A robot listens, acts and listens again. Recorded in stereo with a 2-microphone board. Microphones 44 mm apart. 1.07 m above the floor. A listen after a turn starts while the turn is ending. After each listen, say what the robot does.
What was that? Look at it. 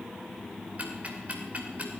Turn 35° right.
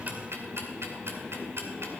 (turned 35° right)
Turn 110° right.
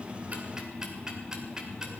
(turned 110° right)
Turn 15° right.
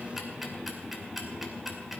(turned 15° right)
Facing the ticking.